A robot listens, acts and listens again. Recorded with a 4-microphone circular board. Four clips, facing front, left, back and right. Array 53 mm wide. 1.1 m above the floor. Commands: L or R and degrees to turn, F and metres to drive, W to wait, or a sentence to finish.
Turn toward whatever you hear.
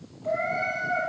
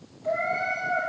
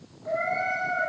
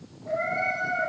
L45
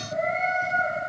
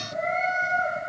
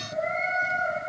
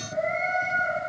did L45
L30
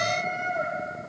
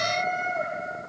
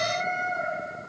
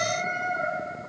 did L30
L20
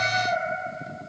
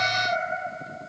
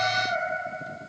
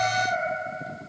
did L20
Facing the cat meowing.